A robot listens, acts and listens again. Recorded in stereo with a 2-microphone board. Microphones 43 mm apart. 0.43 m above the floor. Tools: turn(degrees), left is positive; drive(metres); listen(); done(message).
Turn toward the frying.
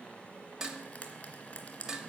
turn(degrees=30)
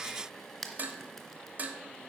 done("Found it: frying, straight ahead.")